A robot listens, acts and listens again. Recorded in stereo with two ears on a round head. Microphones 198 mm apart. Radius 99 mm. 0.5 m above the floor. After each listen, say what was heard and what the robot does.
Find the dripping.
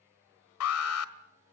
Keep listening.
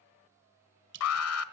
The dripping: about 55° right or 125° right. Turn 55° right.
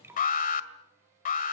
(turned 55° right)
So it is at 10° right. Turn 10° right.
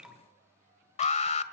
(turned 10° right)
Facing the dripping.